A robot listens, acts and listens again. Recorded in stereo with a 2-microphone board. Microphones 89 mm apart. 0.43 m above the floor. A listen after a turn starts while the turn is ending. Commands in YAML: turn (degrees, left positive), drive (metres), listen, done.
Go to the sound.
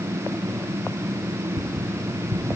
turn: -60
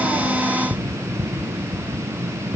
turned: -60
drive: 1.0
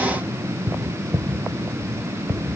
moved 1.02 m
drive: 1.0
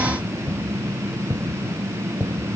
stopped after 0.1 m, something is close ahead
done: "Something is in my way. I am facing the tapping but have not reached it."